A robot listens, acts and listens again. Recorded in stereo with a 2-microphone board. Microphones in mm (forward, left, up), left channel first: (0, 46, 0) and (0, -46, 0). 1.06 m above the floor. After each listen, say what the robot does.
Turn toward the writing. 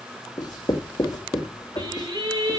Turn 45° left.
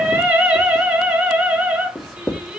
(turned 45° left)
Facing the writing, 2 to 4 m away.